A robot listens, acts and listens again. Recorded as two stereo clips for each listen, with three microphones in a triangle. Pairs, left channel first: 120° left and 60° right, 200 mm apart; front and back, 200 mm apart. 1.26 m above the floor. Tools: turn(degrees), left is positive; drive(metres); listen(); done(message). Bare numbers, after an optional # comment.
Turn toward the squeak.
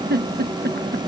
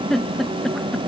listen()
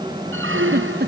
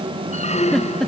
# The squeak: 55° right.
turn(-55)
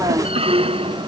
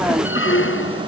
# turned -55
done("Facing the squeak.")